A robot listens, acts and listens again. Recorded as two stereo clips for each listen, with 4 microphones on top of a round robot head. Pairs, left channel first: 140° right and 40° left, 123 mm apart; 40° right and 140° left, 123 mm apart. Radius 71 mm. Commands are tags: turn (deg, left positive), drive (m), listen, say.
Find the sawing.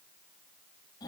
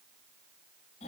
<listen/>
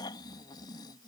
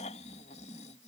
<listen/>
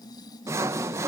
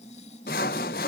<turn deg="-30"/>
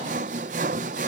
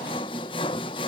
<turn deg="10"/>
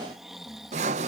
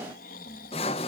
<say>Found it: sawing, straight ahead.</say>